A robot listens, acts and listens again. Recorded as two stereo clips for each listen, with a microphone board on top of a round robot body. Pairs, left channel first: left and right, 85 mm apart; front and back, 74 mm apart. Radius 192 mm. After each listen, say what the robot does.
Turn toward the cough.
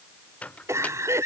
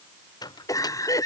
Turn 35° right.
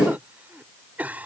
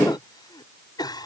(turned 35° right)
Turn 20° right.
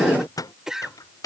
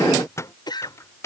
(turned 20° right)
Found it: a cough, straight ahead.